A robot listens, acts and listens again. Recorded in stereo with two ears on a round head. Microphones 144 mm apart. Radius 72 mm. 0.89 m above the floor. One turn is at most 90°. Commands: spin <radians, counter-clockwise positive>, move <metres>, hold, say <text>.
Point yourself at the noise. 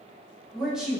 spin -0.52
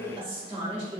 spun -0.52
spin -1.57
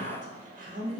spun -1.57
spin -0.96
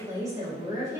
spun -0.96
spin -0.35
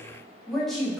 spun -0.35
say Found it: a woman speaking, straight ahead.